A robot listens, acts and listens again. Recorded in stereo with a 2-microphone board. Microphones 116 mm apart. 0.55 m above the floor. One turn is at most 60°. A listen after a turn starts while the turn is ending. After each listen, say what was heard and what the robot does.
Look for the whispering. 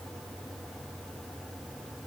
Keep listening.
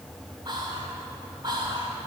The whispering: about 40° right or 140° right. Turn 40° right.
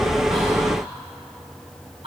So it is at 85° right. Turn 60° right.
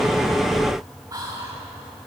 The whispering is now 40° right. Turn 40° right.
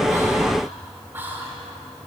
The whispering is now 20° right. Turn 20° right.
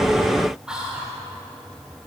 The whispering is now 10° right. Turn 10° right.
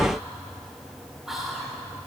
Found it: whispering, straight ahead.